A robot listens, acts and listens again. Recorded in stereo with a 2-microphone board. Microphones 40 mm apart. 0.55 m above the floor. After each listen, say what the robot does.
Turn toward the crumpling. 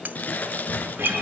Turn 40° left.
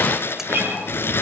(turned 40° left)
Turn 100° left.
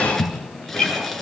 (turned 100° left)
Turn 10° left.
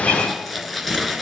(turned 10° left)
Facing the crumpling.